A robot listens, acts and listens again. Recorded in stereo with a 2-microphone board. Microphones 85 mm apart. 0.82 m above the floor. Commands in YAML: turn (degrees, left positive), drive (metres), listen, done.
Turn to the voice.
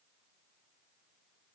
listen: true
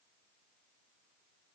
listen: true
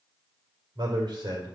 turn: -70
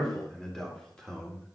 turn: 10
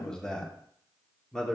turn: 10
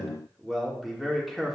done: "Facing the man speaking."